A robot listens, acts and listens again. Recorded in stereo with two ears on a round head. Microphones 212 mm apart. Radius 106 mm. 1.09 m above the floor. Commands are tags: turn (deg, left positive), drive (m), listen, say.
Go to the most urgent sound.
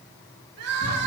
<turn deg="-70"/>
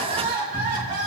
<turn deg="-45"/>
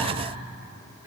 <listen/>
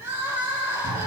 <turn deg="-10"/>
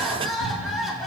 <drive m="1.0"/>
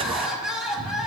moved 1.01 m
<drive m="1.0"/>
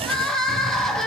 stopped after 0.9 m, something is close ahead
<say>I am next to the crying.</say>